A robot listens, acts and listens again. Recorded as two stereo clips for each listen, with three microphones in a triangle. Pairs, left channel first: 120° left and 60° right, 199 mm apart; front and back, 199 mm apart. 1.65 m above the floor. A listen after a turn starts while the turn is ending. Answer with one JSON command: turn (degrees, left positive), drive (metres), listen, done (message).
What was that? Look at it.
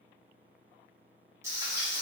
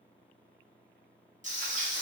{"turn": -130}
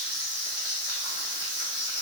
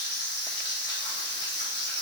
{"turn": 10}
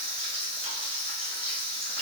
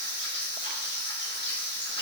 {"done": "Facing the frying."}